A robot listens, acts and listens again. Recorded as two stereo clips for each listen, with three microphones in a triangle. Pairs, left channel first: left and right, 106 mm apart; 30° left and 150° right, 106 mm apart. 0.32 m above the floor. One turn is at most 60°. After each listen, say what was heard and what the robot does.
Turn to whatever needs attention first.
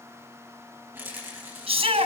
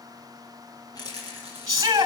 The shout: 95° right. Turn 60° right.
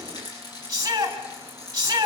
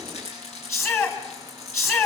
The shout is now 35° right. Turn 35° right.
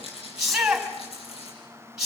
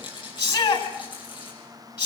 Found it: a shout, straight ahead.